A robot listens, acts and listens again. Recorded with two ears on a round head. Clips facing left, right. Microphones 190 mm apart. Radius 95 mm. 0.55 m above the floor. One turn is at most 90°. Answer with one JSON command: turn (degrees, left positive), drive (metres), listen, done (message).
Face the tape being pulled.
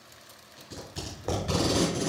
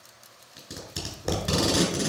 {"turn": -65}
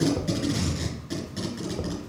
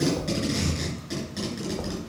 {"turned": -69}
{"done": "Found it: tape being pulled, straight ahead."}